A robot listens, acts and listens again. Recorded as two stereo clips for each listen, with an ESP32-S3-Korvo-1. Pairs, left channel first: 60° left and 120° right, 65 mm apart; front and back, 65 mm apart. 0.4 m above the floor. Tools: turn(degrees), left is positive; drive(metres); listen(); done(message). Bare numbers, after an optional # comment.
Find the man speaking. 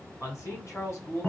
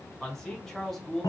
# The man speaking: 85° left.
turn(85)
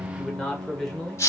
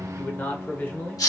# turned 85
# The man speaking is now 10° right.
turn(-10)
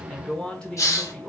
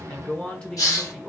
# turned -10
# The man speaking is now 65° left.
turn(65)
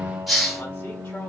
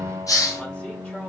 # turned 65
listen()
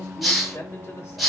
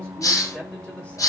# The man speaking is now 70° left.
turn(70)
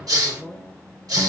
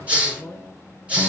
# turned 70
# The man speaking is now 10° right.
turn(-10)
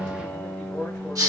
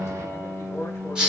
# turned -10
done("Facing the man speaking.")